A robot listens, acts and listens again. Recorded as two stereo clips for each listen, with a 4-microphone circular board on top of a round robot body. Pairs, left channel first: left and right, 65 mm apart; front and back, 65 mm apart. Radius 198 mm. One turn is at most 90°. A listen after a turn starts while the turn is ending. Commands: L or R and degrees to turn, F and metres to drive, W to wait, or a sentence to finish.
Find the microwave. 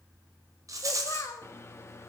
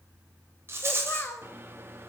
L90
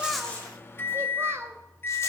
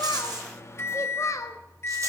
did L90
L40
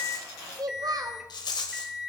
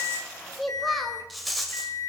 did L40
R10
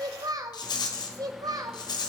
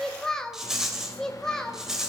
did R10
W
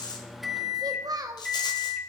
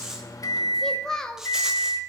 Facing the microwave.